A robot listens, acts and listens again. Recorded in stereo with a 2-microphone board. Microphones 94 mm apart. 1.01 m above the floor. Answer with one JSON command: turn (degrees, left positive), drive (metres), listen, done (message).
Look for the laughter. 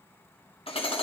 {"listen": true}
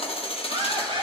{"turn": -65}
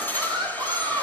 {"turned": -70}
{"turn": -55}
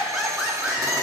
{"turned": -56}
{"turn": -10}
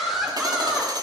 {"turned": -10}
{"done": "Found it: laughter, straight ahead."}